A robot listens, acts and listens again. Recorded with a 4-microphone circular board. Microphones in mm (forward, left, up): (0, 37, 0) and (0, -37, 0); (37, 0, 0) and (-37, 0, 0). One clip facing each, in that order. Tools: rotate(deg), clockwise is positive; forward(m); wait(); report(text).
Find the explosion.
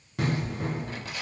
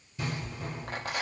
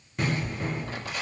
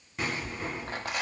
rotate(-90)
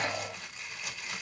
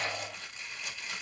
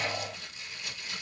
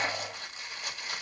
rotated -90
report("Facing where the explosion came from. I can't hear it now.")